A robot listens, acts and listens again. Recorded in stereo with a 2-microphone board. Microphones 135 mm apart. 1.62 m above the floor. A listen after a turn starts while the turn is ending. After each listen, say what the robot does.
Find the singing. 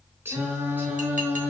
Turn 30° right.
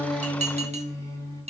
Turn 25° left.
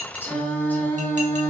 Turn 20° left.
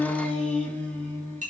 Turn 15° left.
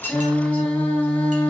Turn 10° left.
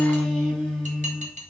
Found it: singing, straight ahead.